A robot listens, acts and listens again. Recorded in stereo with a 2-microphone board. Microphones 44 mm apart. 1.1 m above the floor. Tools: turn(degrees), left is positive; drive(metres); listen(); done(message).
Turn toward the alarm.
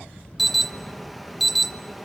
turn(degrees=30)
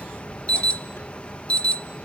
turn(degrees=150)
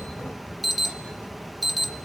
done("Found it: an alarm, straight ahead.")